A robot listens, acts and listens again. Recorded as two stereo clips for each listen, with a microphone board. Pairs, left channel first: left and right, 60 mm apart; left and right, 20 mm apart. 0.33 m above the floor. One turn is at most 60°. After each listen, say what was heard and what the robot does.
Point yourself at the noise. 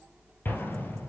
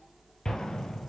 The explosion: about 35° left or 145° left. Turn 35° left.
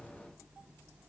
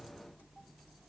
Keep listening.
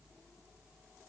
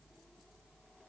I heard an explosion, but can't make it out now. It was about straight ahead or 110° left.